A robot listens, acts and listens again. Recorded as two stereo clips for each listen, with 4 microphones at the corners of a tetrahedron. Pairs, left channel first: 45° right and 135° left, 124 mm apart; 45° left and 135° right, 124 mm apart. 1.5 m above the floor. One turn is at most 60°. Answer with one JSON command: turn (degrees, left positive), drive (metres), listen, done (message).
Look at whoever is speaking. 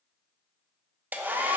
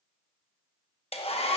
{"listen": true}
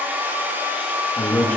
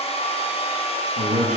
{"turn": -60}
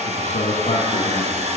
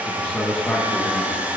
{"turn": -35}
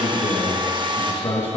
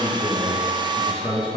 {"done": "Found it: a man speaking, straight ahead."}